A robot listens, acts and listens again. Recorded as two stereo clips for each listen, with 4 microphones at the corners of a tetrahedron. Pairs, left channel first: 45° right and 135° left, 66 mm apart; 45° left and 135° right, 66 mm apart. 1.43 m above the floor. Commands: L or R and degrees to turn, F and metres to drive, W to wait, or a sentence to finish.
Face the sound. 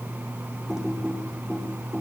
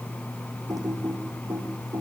R145
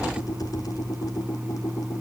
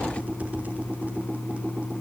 R70
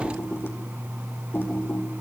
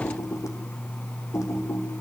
L10
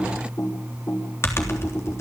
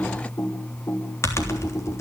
Facing the typing on a keyboard.